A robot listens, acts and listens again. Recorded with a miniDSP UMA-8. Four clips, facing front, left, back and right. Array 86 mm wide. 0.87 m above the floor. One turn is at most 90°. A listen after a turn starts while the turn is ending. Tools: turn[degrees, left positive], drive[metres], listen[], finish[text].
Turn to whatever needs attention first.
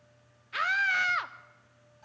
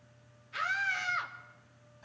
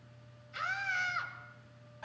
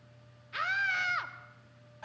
Thought: The scream: 15° right.
Action: turn[-15]
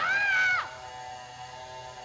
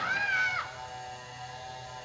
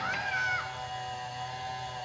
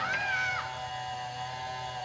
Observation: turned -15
Action: finish[Found it: a scream, straight ahead, 1 to 2 m away.]